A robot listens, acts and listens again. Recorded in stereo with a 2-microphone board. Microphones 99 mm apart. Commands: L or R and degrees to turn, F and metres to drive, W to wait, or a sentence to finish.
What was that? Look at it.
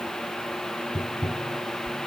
L35
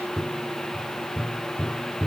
Found it: tapping, straight ahead.